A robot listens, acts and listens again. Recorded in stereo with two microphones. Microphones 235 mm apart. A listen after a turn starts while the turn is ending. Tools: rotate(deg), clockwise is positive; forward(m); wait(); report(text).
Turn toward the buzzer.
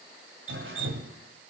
wait()
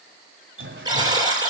rotate(15)
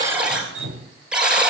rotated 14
report("Found it: a buzzer, straight ahead.")